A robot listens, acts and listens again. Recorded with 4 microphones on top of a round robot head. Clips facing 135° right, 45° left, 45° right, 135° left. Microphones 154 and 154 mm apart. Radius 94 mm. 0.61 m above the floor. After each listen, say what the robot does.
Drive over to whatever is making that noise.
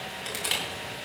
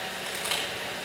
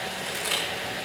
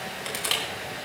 Turn 160° left.
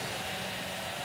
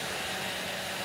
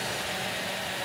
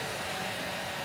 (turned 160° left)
Keep listening.
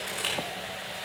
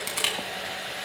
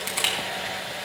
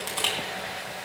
Turn 35° left.
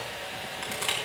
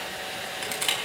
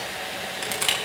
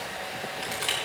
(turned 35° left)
Turn 10° right.
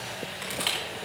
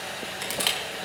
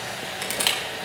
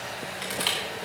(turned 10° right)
Drive 1.0 m forward.
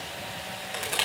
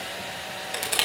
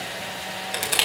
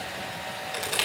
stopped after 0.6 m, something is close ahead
Turn 10° right.
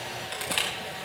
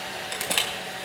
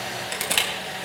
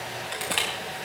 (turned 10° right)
Blocked. The crushing is further on, straight ahead.